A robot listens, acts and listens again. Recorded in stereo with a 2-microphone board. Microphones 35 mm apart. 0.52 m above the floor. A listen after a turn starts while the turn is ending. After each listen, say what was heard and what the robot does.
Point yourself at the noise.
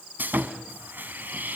The sawing: about 65° right or 115° right. Turn 65° right.
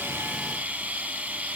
So it is at 45° right. Turn 45° right.
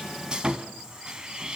The sawing is now 25° right. Turn 25° right.
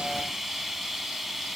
Found it: sawing, straight ahead.